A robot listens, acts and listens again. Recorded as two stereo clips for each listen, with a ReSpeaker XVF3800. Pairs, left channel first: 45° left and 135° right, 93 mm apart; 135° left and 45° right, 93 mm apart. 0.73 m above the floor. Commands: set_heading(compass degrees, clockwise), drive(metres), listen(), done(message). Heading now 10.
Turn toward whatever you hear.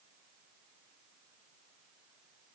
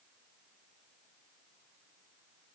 listen()
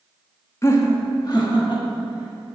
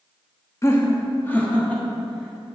set_heading(305)
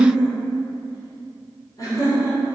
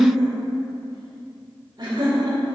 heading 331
done("Facing the laughter, 2 to 4 m away.")